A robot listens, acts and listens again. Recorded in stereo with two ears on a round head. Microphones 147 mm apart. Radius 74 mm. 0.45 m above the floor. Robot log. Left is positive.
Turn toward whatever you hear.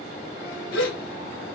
cmd yaw +90
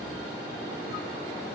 end: I heard a gasp from this way, but can't make it out now.